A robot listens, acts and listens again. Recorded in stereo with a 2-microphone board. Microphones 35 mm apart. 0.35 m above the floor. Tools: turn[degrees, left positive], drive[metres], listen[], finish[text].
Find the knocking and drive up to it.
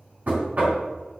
Thought: The knocking: about 50° right or 130° right.
Action: turn[-50]
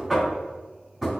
Action: drive[1.0]
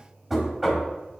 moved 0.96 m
Thought: The knocking is now 10° right.
Action: turn[-10]
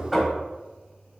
Action: drive[1.0]
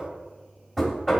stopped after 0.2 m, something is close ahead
Action: finish[Arrived at the knocking, straight ahead.]